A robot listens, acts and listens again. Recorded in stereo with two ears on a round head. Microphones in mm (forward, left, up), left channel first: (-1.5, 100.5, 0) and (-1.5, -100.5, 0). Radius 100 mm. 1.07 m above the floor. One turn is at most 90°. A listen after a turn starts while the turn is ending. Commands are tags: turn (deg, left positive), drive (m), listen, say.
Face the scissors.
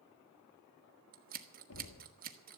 <turn deg="-40"/>
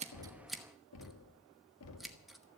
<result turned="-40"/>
<say>Found it: scissors, straight ahead.</say>